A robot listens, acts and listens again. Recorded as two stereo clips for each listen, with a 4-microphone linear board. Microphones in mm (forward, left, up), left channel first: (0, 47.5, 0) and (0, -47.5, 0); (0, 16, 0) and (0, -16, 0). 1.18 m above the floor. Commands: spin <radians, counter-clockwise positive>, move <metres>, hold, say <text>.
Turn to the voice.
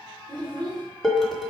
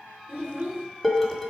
spin -1.05
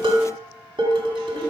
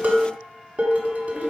hold
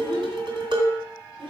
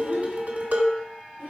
spin -1.05
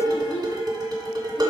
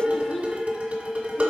spin 0.17
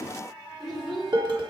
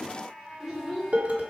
say Facing the child speaking, 2 to 4 m away.